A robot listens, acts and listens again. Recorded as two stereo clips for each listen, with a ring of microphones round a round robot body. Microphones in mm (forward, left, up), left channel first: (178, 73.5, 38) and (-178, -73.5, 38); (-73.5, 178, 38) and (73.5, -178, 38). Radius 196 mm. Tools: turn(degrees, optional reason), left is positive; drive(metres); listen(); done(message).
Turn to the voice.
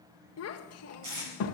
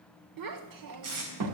turn(degrees=-30, reason="The child speaking: 30° right.")
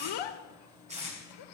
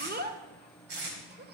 done("Found it: a child speaking, straight ahead.")